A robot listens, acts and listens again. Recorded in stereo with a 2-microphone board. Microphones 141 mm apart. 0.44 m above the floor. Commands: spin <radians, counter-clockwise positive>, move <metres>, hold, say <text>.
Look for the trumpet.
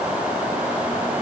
hold
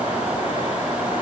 hold
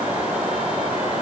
say I can't make out a trumpet.